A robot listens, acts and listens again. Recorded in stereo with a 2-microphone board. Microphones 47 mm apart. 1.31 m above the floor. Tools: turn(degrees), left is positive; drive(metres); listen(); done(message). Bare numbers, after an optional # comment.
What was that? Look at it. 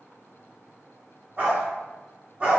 # The dog barking: about 25° right or 155° right.
turn(-25)
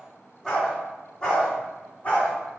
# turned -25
# So it is at 25° left.
turn(25)
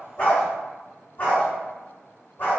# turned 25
# The dog barking is now 40° left.
turn(40)
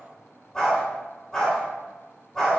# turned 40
done("Facing the dog barking, 1 to 2 m away.")